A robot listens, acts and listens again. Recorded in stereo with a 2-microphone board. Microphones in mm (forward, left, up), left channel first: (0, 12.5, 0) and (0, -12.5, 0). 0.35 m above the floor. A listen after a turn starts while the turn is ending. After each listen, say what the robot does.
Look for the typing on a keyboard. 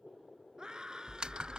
Turn 40° right.
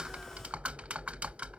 Turn 95° right.
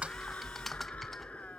Turn 10° left.
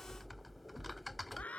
Found it: typing on a keyboard, straight ahead.